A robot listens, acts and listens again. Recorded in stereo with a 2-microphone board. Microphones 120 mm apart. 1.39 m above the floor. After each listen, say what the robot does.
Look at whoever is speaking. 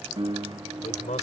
Turn 90° left.
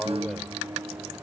Facing the man speaking.